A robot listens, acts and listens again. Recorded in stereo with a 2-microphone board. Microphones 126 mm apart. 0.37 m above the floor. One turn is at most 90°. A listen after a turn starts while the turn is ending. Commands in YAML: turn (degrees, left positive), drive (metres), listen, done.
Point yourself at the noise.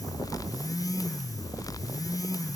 listen: true
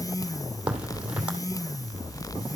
turn: -30
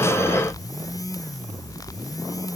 listen: true
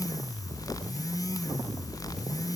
done: "I heard a crack, but can't make it out now. It was about 20° left or 140° right."